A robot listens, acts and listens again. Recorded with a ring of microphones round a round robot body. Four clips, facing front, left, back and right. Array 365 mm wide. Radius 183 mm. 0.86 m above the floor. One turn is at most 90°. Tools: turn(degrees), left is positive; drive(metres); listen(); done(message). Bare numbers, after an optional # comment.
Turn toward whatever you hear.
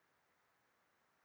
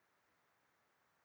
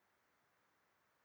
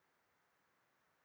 listen()
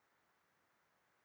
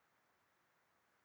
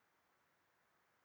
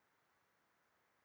listen()
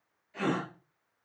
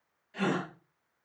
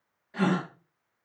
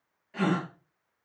# The gasp: 150° right.
turn(-90)
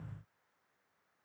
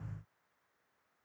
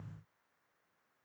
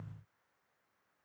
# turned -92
# Nothing new. It was at 55° right.
turn(-55)
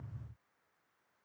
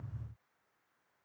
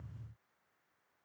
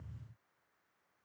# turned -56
done("I heard a gasp from this way, but can't make it out now.")